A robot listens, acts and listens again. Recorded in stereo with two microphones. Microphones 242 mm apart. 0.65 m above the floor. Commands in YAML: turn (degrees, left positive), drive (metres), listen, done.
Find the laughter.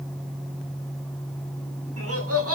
turn: -70
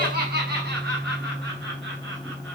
turn: -45
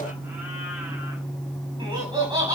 turn: -15
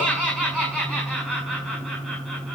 done: "Found it: laughter, straight ahead, over 4 m away."